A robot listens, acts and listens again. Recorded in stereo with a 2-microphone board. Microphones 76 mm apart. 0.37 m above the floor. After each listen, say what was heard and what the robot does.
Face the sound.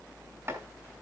The chopping: about 35° right or 145° right. Turn 35° right.
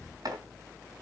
So it is at 105° right. Turn 105° right.
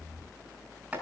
The chopping is now 20° right. Turn 20° right.
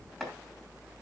Facing the chopping.